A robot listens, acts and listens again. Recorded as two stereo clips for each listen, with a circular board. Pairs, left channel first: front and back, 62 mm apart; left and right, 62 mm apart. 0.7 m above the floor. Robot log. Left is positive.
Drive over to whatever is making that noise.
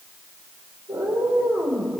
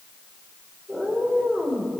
note: The cat meowing: 170° right.
cmd yaw -170
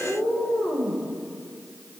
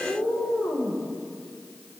note: The cat meowing is now 30° left.
cmd yaw +30
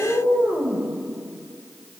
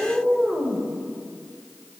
note: The cat meowing is now 10° right.
cmd yaw -10
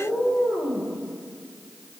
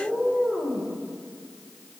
cmd fwd 1.0
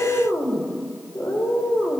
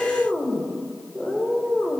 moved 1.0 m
cmd fwd 1.0
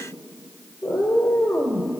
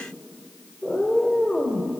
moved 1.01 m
cmd fwd 1.0
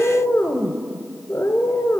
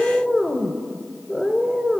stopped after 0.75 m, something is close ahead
end: Arrived at the cat meowing, straight ahead.